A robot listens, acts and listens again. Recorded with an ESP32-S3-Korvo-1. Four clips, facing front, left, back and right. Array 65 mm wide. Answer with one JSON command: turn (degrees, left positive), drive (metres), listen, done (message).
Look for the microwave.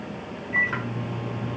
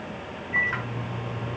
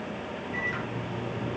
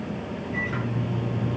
{"turn": 25}
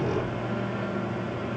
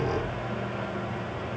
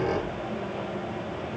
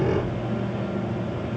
{"turn": 15}
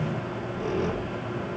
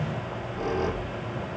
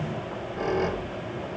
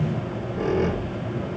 {"listen": true}
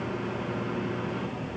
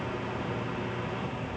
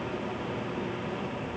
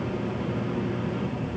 {"listen": true}
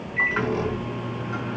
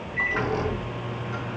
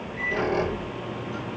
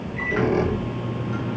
{"done": "Facing the microwave, over 4 m away."}